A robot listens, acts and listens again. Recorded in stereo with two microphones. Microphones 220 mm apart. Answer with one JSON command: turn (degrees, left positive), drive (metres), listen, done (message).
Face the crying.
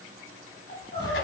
{"turn": 25}
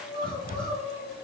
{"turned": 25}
{"done": "Found it: crying, straight ahead."}